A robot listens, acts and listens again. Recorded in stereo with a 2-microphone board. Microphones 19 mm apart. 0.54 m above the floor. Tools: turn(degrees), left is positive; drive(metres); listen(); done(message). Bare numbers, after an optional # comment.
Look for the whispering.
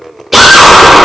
listen()
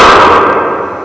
listen()
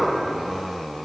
done("I can't make out whispering, only a drill.")